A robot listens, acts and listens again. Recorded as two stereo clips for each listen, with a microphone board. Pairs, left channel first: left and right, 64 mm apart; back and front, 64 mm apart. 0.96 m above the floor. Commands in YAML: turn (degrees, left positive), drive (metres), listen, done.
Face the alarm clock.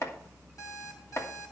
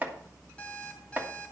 turn: 105
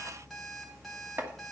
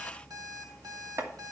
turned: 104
done: "Found it: an alarm clock, straight ahead."